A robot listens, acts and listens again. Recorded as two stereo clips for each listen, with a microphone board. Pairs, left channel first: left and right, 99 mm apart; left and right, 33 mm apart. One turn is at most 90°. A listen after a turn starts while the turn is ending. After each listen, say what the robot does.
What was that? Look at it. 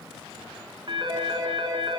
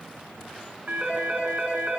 Turn 50° right.
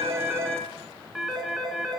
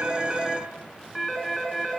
Facing the phone ringing, 2 to 4 m away.